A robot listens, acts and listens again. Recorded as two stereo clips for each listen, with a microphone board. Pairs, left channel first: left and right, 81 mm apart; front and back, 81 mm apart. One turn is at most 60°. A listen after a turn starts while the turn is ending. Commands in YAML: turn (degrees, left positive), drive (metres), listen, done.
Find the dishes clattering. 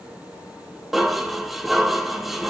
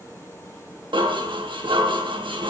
turn: -60
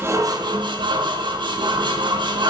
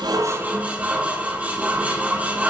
turn: -60
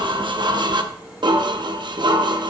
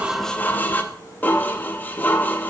turn: -60
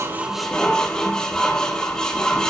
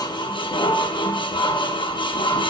turn: 10
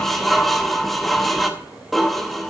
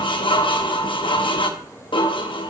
done: "Facing the dishes clattering, under 1 m away."